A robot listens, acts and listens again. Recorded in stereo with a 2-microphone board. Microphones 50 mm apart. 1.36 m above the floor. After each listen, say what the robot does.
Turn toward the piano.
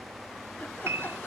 Turn 60° right.
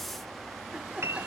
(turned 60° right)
Turn 55° right.
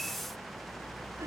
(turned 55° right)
Keep listening.
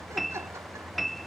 Facing the piano.